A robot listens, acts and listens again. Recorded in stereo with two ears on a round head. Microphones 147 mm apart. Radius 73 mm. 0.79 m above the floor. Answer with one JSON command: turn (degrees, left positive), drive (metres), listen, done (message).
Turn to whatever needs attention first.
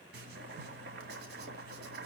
{"listen": true}
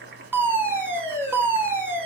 {"turn": -30}
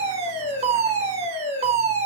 {"turn": -135}
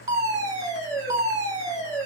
{"turn": -25}
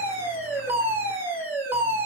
{"turn": -15}
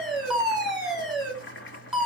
{"done": "Facing the fire alarm, over 4 m away."}